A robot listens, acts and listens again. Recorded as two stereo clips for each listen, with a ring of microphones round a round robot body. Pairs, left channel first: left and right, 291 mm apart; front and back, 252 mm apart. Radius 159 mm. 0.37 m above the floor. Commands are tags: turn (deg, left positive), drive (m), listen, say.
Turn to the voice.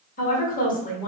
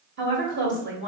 <turn deg="150"/>
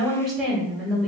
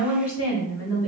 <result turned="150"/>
<say>Found it: a woman speaking, straight ahead.</say>